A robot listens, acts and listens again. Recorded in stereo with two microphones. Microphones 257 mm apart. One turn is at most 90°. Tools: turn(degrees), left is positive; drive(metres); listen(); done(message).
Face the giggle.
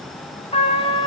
listen()
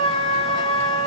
listen()
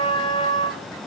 done("I can't make out a giggle, only a trumpet.")